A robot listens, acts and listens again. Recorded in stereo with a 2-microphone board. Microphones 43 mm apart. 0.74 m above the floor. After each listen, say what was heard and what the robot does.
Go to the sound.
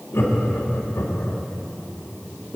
The laughter: about 70° left or 110° left. Turn 70° left.
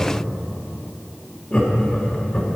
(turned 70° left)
So it is at 20° left. Turn 20° left.
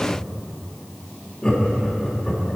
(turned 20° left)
The laughter is now 10° left. Turn 10° left.
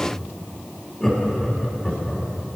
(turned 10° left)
Drive 1.0 m forward.
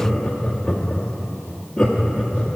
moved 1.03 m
The laughter is now 15° left. Turn 15° left.
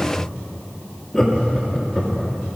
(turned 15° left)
Drive 1.0 m forward.
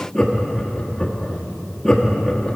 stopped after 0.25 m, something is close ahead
The laughter is now 10° left. Turn 10° left.
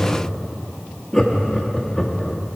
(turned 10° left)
Arrived at the laughter, straight ahead.